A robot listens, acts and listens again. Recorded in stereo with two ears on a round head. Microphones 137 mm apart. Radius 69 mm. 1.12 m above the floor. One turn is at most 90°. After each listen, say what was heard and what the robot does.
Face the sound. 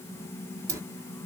The dropped coin: about 20° right or 160° right. Turn 20° right.
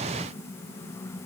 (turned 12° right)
Keep listening.
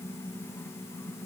I heard a dropped coin, but can't make it out now. It was about 10° right or 150° right.